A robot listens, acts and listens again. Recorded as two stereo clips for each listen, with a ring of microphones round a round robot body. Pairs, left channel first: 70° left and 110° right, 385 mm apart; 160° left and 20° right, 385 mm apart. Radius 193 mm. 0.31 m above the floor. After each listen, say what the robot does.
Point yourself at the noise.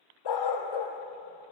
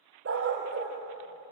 Turn 40° left.
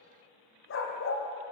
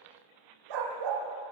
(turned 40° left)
Turn 10° left.
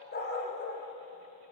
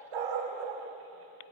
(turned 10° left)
Found it: a dog barking, straight ahead, over 4 m away.